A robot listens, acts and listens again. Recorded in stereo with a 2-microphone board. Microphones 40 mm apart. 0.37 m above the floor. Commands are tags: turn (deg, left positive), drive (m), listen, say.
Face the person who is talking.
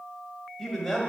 <turn deg="30"/>
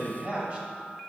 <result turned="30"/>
<turn deg="-35"/>
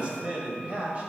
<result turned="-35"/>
<turn deg="-35"/>
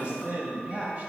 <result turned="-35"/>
<turn deg="-30"/>
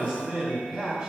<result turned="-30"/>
<turn deg="-10"/>
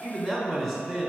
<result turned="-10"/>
<say>Facing the man speaking, 1 to 2 m away.</say>